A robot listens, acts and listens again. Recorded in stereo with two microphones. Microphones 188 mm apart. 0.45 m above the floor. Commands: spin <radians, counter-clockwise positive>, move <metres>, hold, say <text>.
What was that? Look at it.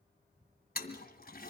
spin 0.96
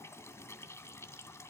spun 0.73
spin 0.26
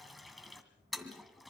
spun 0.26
say Facing the toilet flushing.